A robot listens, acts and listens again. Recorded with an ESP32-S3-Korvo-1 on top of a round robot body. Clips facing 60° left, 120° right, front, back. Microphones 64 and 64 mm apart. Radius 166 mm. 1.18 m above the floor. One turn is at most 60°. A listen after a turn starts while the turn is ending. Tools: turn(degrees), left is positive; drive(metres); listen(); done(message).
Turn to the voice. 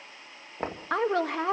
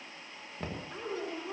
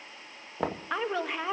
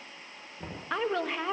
turn(degrees=60)
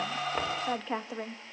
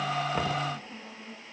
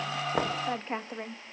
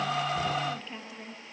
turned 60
turn(degrees=50)
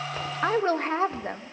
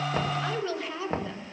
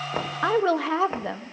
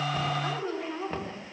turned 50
turn(degrees=10)
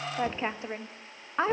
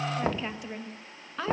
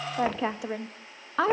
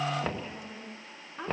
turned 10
done("Facing the woman speaking, 1 to 2 m away.")